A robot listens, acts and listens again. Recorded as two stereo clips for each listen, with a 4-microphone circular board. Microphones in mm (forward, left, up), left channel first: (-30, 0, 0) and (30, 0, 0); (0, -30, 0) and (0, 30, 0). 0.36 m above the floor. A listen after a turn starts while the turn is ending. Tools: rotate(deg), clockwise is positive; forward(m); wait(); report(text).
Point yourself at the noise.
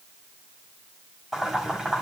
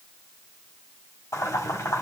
rotate(80)
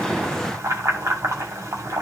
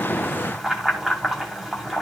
report("Found it: boiling, straight ahead.")